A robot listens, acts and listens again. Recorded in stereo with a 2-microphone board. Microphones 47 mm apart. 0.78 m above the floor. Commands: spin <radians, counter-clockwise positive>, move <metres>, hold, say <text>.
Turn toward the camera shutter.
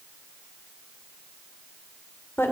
hold
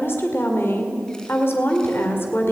hold
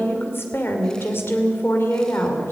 say I can't make out a camera shutter, only a woman speaking.